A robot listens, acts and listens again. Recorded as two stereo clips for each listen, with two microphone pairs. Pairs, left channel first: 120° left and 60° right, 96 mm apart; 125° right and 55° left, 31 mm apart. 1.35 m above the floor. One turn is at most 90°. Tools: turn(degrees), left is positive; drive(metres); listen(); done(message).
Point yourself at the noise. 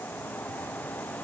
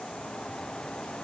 listen()
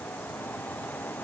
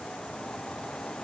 listen()
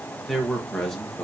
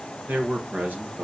turn(degrees=35)
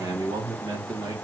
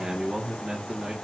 turn(degrees=-10)
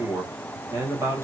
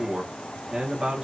done("Facing the man speaking.")